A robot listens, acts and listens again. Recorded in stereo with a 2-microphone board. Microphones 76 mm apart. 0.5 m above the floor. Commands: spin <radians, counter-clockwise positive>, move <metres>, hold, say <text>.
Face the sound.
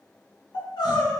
spin 1.57
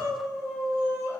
say Found it: crying, straight ahead.